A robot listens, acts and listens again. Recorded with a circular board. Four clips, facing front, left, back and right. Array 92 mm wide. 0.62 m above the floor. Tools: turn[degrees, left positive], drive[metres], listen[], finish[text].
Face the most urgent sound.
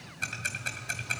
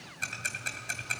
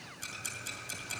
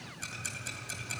Action: listen[]
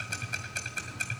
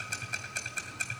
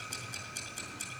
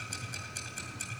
Action: listen[]
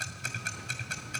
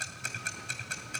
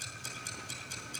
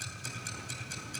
Action: finish[I can't make out anything urgent to turn to.]